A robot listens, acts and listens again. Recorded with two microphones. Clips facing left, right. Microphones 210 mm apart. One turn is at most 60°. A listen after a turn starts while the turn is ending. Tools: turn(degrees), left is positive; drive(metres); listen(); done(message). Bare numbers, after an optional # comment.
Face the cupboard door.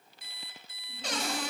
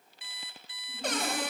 # The cupboard door: about 55° right or 125° right.
turn(-55)
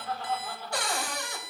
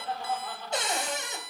# So it is at 25° right.
turn(-25)
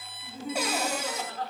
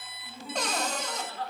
# The cupboard door is now 10° left.
turn(10)
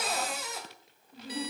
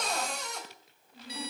done("Facing the cupboard door, 2 to 4 m away.")